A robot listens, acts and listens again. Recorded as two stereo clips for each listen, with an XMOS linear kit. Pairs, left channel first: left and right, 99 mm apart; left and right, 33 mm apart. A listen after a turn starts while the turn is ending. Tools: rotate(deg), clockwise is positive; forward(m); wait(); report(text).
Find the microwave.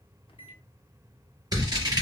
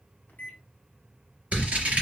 rotate(-65)
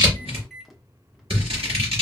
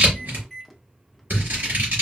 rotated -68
report("Found it: a microwave, straight ahead, under 1 m away.")